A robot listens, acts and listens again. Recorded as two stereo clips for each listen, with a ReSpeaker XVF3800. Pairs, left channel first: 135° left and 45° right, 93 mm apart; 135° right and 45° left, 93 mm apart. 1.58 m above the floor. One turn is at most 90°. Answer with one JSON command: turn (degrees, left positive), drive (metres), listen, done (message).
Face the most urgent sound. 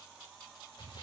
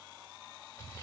{"listen": true}
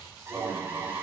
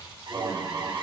{"turn": 15}
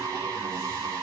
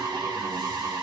{"done": "Found it: an alarm, straight ahead."}